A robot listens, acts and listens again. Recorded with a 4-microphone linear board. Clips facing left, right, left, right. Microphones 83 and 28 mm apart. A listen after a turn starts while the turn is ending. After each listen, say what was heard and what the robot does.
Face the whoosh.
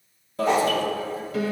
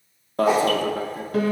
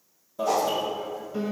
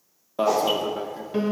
Turn 30° right.
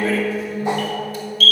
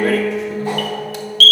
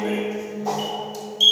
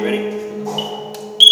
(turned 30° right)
Keep listening.
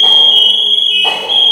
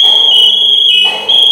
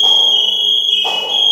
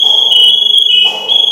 Keep listening.
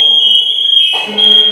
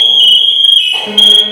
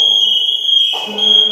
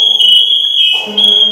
I heard a whoosh, but can't make it out now. It was about 20° left or 140° right.